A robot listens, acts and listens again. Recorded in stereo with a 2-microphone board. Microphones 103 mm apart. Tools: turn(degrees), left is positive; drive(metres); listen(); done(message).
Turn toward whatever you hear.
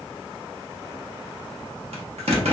turn(degrees=-90)
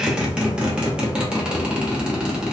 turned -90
turn(degrees=-10)
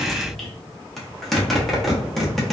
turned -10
done("Facing the zipper, under 1 m away.")